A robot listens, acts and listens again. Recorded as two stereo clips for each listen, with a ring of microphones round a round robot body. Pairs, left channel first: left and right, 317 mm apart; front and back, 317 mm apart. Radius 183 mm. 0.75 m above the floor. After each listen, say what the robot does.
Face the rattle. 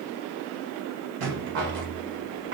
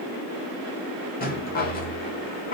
Turn 65° right.
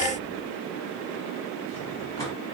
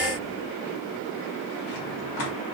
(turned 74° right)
Turn 10° left.
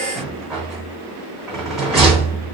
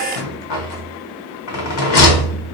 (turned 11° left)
Found it: a rattle, straight ahead.